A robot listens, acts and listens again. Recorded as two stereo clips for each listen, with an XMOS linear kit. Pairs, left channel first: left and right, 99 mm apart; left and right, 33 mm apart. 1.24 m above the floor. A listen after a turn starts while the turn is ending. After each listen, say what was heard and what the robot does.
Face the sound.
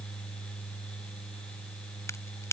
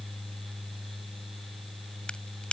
The crack: about 30° left or 150° left. Turn 30° left.
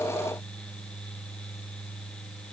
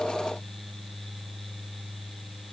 Keep listening.
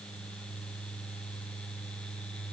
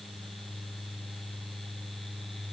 I heard a crack, but can't make it out now. It was about straight ahead or 120° left.